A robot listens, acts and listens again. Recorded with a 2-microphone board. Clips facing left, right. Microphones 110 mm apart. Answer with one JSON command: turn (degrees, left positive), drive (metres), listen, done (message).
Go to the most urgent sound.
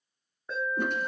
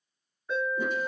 {"turn": 40}
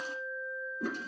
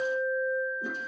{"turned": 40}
{"drive": 1.0}
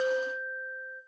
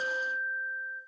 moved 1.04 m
{"drive": 1.0}
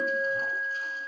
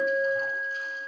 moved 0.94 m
{"drive": 1.0}
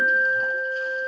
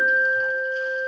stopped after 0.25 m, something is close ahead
{"turn": -10}
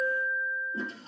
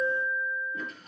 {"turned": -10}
{"done": "Arrived at the alarm, straight ahead."}